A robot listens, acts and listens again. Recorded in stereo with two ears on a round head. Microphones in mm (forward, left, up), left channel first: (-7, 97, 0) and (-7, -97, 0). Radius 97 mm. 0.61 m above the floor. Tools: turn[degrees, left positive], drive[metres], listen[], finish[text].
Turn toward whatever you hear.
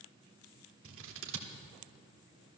Thought: The scissors: about 60° right or 120° right.
Action: turn[-60]
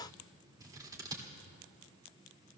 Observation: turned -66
Thought: So it is at 20° right.
Action: turn[-20]
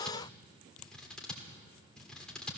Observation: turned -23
Action: finish[Facing the scissors, 1 to 2 m away.]